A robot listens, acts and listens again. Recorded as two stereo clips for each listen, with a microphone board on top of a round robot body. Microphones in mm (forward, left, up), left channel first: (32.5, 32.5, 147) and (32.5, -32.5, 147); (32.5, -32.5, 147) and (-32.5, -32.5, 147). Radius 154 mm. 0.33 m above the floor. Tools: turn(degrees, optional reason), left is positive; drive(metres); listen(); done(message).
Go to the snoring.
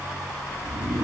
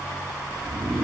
turn(degrees=-105, reason="The snoring: 105° right.")
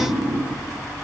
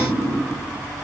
turn(degrees=-45, reason="The snoring is now 45° right.")
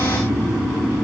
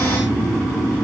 turn(degrees=-15, reason="The snoring is now 15° right.")
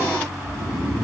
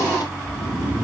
drive(metres=1.0)
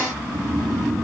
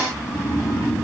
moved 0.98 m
drive(metres=1.0)
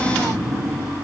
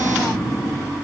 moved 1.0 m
drive(metres=1.0)
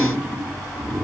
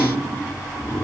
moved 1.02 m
turn(degrees=-10, reason="The snoring is now 10° right.")
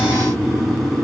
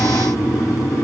drive(metres=1.0)
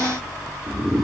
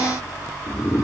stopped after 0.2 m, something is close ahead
done("I am next to the snoring.")